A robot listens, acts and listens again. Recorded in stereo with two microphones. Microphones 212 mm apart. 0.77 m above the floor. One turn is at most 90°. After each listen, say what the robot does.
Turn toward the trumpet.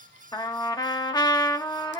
Turn 20° left.
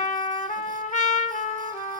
Turn 90° left.
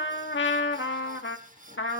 Turn 80° left.
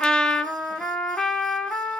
Found it: a trumpet, straight ahead.